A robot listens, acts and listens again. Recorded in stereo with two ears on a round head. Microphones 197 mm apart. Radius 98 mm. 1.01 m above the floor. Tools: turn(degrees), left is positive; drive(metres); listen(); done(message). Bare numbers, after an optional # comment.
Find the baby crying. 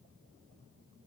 listen()
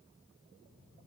listen()
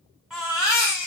turn(-30)
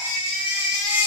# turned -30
# So it is at 30° left.
turn(30)
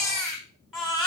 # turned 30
done("Facing the baby crying, 1 to 2 m away.")